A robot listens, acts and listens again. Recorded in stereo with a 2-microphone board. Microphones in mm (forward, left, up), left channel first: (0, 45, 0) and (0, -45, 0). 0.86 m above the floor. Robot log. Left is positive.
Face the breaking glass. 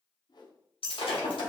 cmd yaw +90
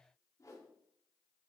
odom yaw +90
end: I heard breaking glass from this way, but can't make it out now.